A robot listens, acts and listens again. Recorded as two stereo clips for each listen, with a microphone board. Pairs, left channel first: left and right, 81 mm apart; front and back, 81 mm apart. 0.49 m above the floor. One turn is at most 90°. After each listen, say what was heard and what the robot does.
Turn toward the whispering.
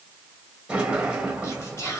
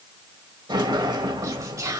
The whispering: 135° left. Turn 90° left.
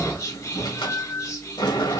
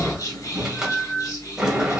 The whispering is now 40° left. Turn 40° left.
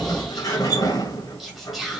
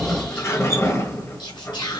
Facing the whispering.